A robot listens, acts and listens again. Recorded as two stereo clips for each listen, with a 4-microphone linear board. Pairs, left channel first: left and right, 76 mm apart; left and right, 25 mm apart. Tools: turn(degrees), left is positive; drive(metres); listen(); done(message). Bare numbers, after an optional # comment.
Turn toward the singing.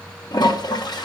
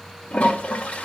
listen()
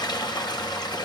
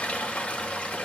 listen()
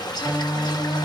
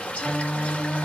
# The singing: about 60° left or 120° left.
turn(60)
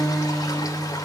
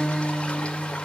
# So it is at 10° left.
turn(10)
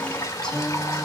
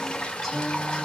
done("Facing the singing.")